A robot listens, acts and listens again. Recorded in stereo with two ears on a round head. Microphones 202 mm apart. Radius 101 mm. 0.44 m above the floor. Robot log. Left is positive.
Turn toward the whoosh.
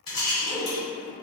note: The whoosh: about 60° left or 120° left.
cmd yaw +60
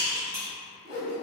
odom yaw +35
note: So it is at 80° left.
cmd yaw +80
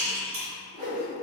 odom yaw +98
note: The whoosh is now 20° right.
cmd yaw -20
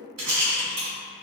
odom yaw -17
cmd idle
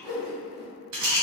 end: Found it: a whoosh, straight ahead.